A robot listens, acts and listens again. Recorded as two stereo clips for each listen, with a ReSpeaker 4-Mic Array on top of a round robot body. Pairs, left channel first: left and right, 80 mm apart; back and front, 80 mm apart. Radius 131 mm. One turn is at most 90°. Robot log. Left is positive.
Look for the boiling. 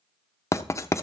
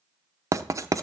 cmd idle
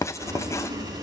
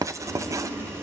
note: The boiling: 55° right.
cmd yaw -55
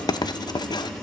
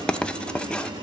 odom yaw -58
end: Found it: boiling, straight ahead.